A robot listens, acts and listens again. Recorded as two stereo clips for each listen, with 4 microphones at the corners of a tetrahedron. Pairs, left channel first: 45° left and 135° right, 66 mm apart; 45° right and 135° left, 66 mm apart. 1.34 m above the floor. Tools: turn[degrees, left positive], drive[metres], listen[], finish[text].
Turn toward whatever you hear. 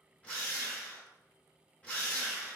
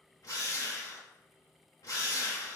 Thought: The drill: 25° right.
Action: turn[-25]
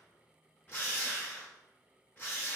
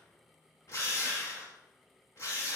Thought: The drill is now 10° right.
Action: turn[-10]
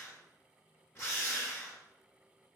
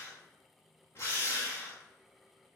Action: finish[Facing the drill, 1 to 2 m away.]